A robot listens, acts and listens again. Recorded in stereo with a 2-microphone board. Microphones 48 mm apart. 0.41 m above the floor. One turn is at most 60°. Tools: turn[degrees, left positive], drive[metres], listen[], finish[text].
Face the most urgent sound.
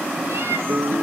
Action: listen[]
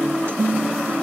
Action: listen[]
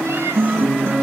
Action: finish[I can't make out anything urgent, only a guitar.]